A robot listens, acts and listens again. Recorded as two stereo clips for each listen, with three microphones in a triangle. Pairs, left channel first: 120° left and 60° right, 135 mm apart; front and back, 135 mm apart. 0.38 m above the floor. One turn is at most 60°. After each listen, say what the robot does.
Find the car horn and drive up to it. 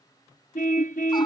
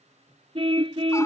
Turn 60° left.
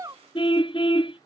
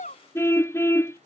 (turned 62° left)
Turn 60° left.
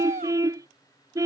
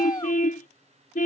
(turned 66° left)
Drive 1.0 m forward.
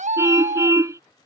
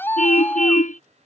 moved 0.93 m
Turn 10° left.
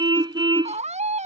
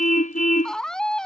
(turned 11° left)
Drive 1.0 m forward.
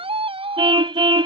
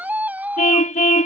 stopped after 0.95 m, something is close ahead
Turn 10° right.
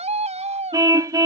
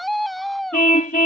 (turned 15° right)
Arrived at the car horn, straight ahead.